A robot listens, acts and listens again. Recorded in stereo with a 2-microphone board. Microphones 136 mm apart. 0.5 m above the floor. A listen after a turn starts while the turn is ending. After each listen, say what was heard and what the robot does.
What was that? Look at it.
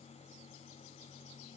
Keep listening.
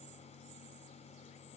Keep listening.
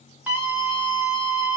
Turn 30° right.
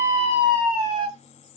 So it is at 135° right. Turn 135° right.
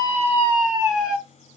Facing the scream, 1 to 2 m away.